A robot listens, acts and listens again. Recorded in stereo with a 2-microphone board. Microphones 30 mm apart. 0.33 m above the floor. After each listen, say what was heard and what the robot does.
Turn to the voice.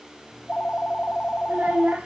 The child speaking: about 50° right or 130° right. Turn 50° right.
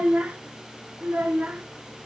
So it is at 80° right. Turn 80° right.
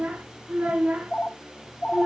The child speaking is now 70° right. Turn 70° right.
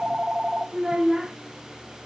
The child speaking is now 10° right. Turn 10° right.
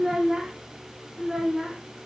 Facing the child speaking, 1 to 2 m away.